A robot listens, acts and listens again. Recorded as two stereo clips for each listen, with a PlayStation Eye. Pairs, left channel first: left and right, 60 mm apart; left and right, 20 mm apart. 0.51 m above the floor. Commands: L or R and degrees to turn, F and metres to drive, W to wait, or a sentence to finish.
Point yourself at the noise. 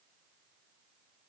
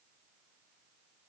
W
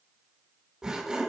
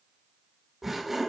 R30
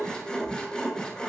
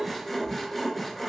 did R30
L15
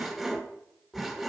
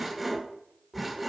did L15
Found it: sawing, straight ahead.